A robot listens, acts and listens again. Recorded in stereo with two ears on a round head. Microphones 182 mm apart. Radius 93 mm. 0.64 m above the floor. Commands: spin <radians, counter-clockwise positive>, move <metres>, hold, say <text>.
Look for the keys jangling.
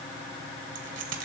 spin -1.13
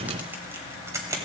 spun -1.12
spin -0.26
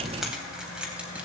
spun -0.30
say Found it: keys jangling, straight ahead, 2 to 4 m away.